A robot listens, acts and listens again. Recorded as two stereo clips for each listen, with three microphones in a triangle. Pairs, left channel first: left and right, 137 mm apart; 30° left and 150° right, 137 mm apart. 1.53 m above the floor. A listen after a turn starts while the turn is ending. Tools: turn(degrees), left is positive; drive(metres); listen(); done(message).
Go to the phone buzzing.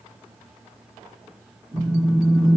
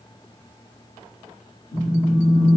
drive(metres=1.0)
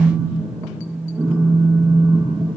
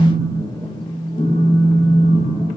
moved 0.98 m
drive(metres=1.0)
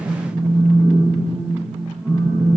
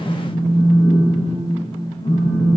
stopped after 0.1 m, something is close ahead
done("Arrived at the phone buzzing, straight ahead.")